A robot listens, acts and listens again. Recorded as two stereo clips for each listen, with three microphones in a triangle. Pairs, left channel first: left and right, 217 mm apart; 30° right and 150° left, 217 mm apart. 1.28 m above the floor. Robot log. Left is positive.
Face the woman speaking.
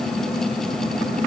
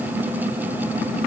cmd idle
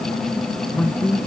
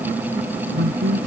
note: The woman speaking: 175° left.
cmd yaw +175
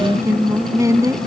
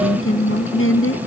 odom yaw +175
note: The woman speaking is now 15° right.
cmd yaw -15
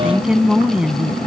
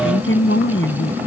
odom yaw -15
end: Found it: a woman speaking, straight ahead.